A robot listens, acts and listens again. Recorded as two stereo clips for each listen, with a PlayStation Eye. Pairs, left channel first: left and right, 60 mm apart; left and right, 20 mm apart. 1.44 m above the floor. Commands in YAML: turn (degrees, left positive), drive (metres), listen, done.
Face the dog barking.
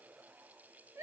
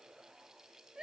listen: true
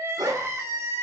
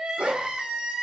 turn: -90
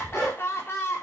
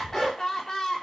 done: "Found it: a dog barking, straight ahead, over 4 m away."